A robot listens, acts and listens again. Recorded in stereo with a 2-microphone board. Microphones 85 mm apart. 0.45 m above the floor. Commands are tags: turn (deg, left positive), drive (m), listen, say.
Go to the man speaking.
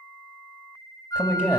<turn deg="25"/>
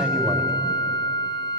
<listen/>
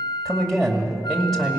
<drive m="1.0"/>
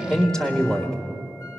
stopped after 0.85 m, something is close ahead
<turn deg="10"/>
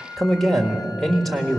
<say>I am next to the man speaking.</say>